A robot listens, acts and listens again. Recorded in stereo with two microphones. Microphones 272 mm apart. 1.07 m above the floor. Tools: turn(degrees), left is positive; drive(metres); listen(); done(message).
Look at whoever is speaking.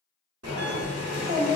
turn(degrees=-35)
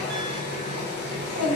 turn(degrees=-110)
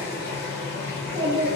turn(degrees=-50)
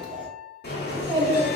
turn(degrees=-15)
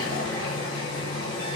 listen()
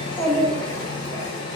done("Facing the child speaking.")